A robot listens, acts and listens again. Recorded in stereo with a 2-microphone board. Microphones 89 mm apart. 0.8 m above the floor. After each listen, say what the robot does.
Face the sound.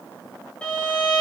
Turn 30° left.
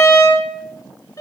Turn 140° left.
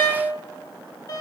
Turn 50° left.
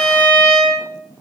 Turn 15° left.
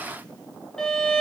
Found it: a violin, straight ahead.